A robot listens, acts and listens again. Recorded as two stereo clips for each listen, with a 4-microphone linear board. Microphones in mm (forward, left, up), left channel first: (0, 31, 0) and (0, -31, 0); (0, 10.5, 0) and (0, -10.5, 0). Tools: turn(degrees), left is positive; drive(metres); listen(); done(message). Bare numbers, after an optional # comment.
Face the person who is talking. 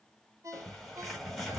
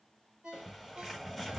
listen()
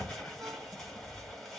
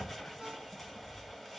listen()
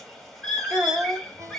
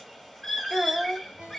# The child speaking: about 30° right or 150° right.
turn(-30)
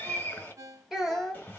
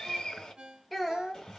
done("Found it: a child speaking, straight ahead, 2 to 4 m away.")